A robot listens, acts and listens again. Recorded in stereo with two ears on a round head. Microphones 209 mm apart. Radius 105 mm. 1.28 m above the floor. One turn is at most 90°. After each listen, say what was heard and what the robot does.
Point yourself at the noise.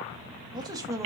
Turn 30° right.
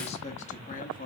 So it is at 40° left. Turn 40° left.
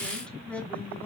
The man speaking is now 10° left. Turn 10° left.
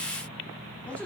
The man speaking is now 10° left. Turn 10° left.
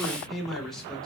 Facing the man speaking.